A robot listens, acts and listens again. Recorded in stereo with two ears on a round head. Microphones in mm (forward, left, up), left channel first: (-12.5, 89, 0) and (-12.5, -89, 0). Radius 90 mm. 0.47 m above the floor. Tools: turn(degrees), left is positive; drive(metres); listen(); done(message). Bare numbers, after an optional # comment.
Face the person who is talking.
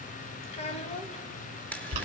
# The child speaking: about 35° left or 145° left.
turn(35)
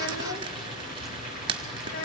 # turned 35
# So it is at 110° left.
turn(110)
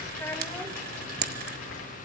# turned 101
# The child speaking is now 10° left.
turn(10)
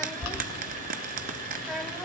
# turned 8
done("Facing the child speaking, 1 to 2 m away.")